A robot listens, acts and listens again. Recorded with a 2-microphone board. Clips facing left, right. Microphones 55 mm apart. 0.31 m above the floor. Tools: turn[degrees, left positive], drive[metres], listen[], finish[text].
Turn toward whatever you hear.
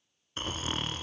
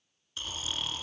Thought: The snoring: about 40° left or 140° left.
Action: turn[40]
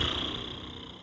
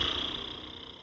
Action: finish[Facing the snoring, 1 to 2 m away.]